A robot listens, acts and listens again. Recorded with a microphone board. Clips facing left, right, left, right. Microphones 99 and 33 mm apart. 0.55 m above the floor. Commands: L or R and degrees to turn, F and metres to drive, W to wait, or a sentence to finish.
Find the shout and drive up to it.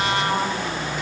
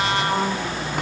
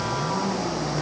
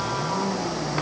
W
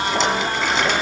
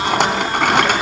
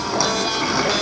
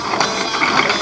W
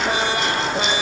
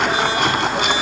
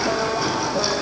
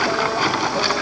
I can't make out a shout, only a rattle.